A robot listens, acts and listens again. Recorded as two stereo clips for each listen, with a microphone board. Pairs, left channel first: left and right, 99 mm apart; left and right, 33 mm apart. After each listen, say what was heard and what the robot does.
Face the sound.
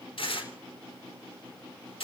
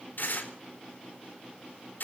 The tearing paper: about 65° left or 115° left. Turn 65° left.
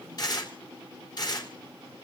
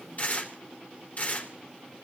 So it is at 45° left. Turn 45° left.
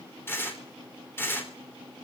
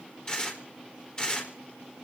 The tearing paper is now 25° left. Turn 25° left.
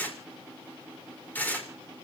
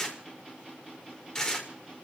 The tearing paper is now 20° left. Turn 20° left.
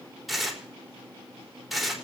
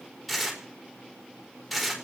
Facing the tearing paper.